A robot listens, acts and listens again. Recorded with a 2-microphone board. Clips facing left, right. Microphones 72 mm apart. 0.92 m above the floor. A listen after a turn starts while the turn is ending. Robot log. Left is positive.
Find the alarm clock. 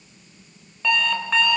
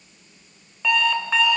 cmd yaw +30
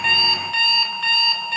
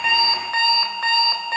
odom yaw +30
note: So it is at 35° right.
cmd yaw -35
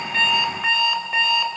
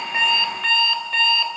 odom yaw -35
note: The alarm clock is now 10° left.
cmd yaw +10
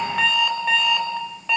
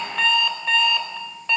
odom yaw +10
end: Found it: an alarm clock, straight ahead.